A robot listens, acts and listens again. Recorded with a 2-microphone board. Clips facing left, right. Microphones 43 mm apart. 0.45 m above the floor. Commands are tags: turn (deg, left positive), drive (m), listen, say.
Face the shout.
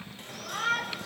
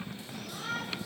<turn deg="60"/>
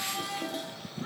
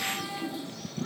<turn deg="20"/>
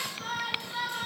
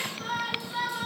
<say>Facing the shout.</say>